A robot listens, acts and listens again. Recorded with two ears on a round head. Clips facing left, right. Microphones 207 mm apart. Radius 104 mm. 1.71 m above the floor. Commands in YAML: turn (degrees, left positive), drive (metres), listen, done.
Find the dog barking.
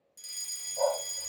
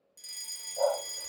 turn: -30
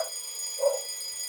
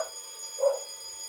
turn: -145
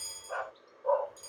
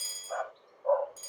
turn: 45
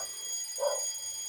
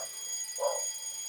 turn: 20
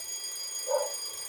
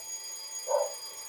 done: "Facing the dog barking, 2 to 4 m away."